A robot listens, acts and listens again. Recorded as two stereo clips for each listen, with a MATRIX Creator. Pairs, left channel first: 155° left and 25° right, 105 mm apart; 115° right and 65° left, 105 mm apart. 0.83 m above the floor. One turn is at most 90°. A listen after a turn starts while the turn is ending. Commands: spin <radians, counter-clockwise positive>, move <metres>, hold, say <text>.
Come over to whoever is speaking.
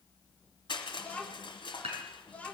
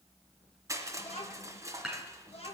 spin -1.57
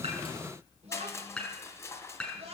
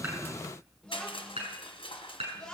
spin -0.52
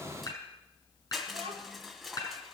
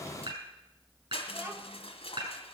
move 1.0
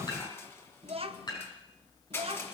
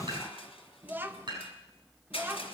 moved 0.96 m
move 1.0
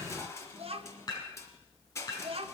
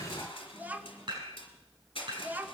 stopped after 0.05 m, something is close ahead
say I am next to the child speaking.